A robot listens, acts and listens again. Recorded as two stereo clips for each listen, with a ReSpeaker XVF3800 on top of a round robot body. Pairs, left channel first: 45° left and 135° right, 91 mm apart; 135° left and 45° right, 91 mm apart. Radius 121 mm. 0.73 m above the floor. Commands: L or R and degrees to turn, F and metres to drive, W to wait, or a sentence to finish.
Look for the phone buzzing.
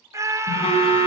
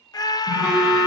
L35
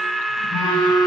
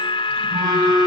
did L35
Facing the phone buzzing.